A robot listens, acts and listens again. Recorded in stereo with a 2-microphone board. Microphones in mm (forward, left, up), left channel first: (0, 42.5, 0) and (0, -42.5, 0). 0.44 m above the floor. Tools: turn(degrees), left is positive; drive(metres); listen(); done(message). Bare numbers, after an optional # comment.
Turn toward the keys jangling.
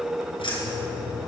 turn(90)
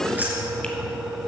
# So it is at 25° right.
turn(-25)
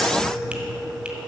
listen()
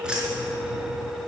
# The keys jangling is now 10° right.
turn(-10)
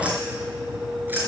# The keys jangling is now 25° right.
turn(-25)
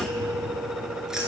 done("Facing the keys jangling.")